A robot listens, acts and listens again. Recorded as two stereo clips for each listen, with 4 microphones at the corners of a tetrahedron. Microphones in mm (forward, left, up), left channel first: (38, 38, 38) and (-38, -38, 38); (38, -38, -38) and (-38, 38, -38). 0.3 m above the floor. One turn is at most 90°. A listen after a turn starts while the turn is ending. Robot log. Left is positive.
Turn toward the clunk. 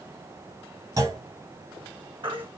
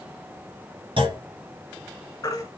note: The clunk: 170° left.
cmd yaw +90
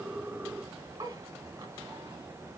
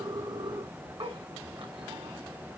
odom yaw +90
note: Nothing new. It was at 80° left.
cmd yaw +80
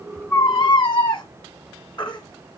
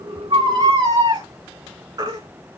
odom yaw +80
end: Facing where the clunk came from. I can't hear it now.